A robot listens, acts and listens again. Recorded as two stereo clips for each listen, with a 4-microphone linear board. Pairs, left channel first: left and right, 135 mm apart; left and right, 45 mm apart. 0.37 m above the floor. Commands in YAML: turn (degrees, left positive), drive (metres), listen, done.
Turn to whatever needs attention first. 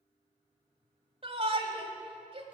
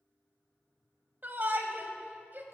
turn: -45
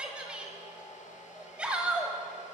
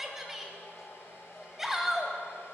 turn: -10
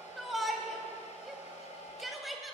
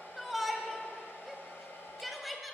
done: "Facing the shout, 1 to 2 m away."